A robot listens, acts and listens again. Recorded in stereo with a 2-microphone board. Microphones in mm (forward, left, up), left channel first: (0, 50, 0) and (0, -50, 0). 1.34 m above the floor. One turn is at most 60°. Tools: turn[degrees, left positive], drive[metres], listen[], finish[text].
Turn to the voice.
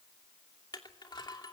Action: listen[]
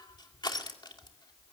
Action: listen[]
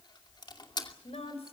Action: turn[60]
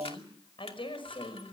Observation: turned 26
Thought: So it is at 60° left.
Action: turn[60]
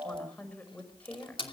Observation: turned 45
Thought: The woman speaking is now 15° left.
Action: turn[15]
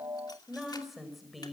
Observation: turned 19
Action: finish[Facing the woman speaking, over 4 m away.]